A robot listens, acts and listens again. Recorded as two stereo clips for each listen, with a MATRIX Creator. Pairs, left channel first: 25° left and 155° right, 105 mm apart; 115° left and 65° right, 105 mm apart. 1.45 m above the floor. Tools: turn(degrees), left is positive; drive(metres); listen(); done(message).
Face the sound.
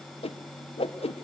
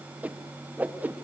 done("Facing the whoosh, 1 to 2 m away.")